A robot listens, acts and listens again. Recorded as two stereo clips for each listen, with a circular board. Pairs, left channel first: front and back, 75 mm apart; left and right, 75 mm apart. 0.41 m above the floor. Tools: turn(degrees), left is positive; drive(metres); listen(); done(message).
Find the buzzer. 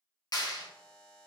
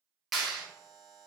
turn(degrees=-80)
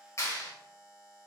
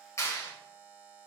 turn(degrees=-30)
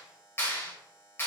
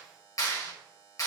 turn(degrees=-20)
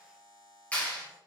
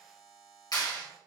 turn(degrees=-10)
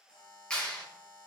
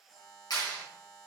done("Facing the buzzer, 1 to 2 m away.")